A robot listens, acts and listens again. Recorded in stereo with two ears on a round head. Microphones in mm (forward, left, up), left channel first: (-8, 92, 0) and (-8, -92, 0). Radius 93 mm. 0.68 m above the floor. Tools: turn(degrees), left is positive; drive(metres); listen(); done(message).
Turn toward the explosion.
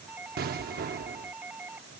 turn(degrees=-50)
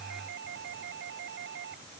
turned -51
listen()
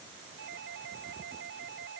done("I heard an explosion, but can't make it out now. It was about 5° left or 80° right.")